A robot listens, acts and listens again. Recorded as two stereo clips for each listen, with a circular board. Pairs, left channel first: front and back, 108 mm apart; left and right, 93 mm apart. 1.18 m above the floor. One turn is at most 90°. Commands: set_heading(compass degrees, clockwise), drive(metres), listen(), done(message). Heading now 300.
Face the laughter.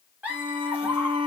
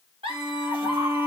set_heading(30)
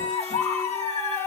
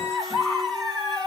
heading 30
done("Facing the laughter.")